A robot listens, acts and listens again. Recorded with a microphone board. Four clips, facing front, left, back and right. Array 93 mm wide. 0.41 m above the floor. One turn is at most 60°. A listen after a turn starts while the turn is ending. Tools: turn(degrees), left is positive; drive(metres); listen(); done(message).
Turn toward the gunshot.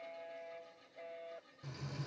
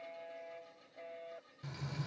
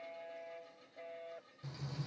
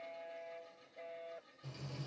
listen()
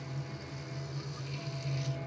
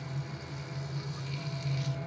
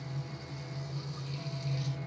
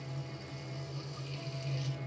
listen()
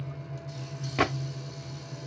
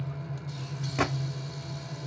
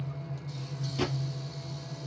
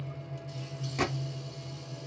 turn(degrees=25)
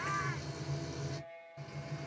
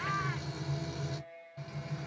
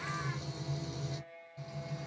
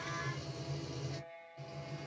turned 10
turn(degrees=15)
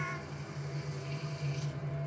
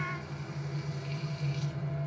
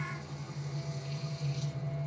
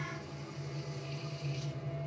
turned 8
done("Facing where the gunshot came from. I can't hear it now.")